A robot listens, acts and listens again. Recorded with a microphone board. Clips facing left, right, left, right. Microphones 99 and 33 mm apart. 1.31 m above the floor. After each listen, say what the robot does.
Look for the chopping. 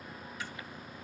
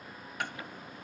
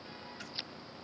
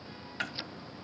Turn 55° right.
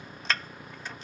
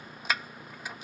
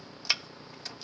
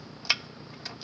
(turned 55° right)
Turn 10° right.
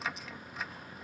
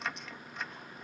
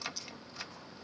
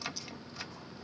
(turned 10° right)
Facing the chopping.